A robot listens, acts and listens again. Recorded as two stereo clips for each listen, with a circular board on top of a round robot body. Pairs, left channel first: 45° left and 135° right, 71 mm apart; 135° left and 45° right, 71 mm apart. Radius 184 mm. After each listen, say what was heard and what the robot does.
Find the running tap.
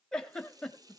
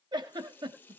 The running tap: 160° right. Turn 160° right.
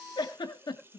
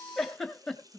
The running tap is now 75° right. Turn 75° right.
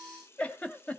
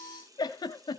The running tap is now 10° right. Turn 10° right.
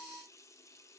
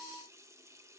Facing the running tap, 2 to 4 m away.